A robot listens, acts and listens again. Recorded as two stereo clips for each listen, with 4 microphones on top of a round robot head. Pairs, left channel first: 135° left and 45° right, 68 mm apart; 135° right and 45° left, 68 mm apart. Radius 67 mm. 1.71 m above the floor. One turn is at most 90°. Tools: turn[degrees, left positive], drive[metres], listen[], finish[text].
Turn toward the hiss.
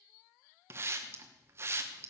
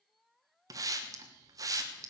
Thought: The hiss: 10° left.
Action: turn[10]
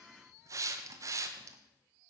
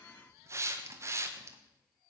Action: finish[Found it: a hiss, straight ahead.]